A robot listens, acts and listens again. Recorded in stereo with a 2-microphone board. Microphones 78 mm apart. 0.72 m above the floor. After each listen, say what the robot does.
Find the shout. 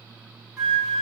Keep listening.
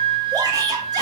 Turn 60° right.
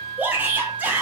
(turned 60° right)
Turn 30° right.
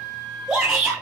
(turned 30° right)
Turn 10° right.
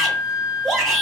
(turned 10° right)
Facing the shout.